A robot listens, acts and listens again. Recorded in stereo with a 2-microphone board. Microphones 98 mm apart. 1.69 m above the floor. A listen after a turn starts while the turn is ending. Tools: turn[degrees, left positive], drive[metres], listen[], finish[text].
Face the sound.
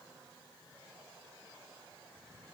Action: listen[]
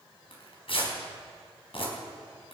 Thought: The tearing paper: about 70° left or 110° left.
Action: turn[70]
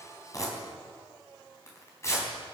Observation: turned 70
Thought: So it is at 30° left.
Action: turn[30]
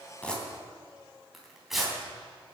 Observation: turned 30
Action: finish[Found it: tearing paper, straight ahead, 2 to 4 m away.]